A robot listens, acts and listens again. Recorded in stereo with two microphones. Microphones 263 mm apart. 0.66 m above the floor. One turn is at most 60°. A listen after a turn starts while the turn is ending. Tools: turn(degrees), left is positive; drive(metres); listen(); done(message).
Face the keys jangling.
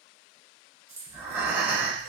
turn(degrees=-55)
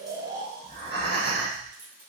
turn(degrees=-30)
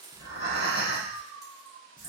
listen()
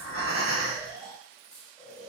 turn(degrees=40)
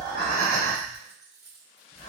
done("Facing the keys jangling, 1 to 2 m away.")